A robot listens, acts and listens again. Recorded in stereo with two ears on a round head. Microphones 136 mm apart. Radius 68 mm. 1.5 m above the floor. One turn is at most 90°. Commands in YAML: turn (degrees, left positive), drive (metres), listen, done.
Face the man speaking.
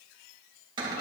listen: true
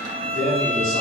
turn: 65
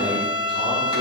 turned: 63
listen: true
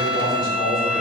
turn: 60
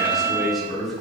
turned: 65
done: "Found it: a man speaking, straight ahead."